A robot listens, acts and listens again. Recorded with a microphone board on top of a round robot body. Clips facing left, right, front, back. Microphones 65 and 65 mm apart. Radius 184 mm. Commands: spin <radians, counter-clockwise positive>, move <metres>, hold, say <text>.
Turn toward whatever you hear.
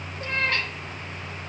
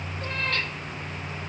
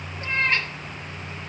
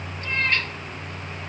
spin 1.22
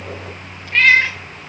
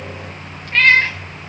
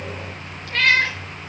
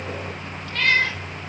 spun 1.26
say Facing the cat meowing, 2 to 4 m away.